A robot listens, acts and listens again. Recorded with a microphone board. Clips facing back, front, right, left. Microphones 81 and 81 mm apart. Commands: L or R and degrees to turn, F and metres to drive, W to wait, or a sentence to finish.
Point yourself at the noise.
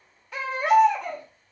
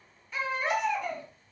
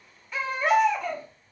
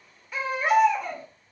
L175
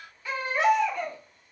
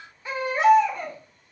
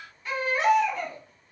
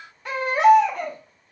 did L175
L65
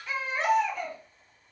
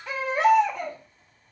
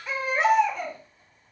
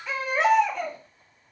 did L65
Facing the baby crying, 1 to 2 m away.